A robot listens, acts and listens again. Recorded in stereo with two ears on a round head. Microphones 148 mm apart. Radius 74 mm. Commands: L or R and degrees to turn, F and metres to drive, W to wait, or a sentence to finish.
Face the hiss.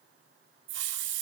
R90
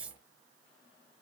Facing the hiss.